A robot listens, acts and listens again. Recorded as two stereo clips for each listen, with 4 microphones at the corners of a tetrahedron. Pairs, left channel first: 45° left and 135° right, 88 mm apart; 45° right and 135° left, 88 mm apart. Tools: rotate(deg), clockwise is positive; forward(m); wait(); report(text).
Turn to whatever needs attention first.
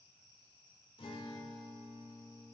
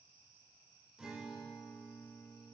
wait()
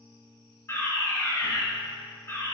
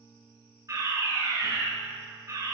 rotate(-100)
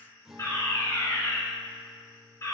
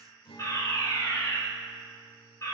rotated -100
report("Found it: a fire alarm, straight ahead.")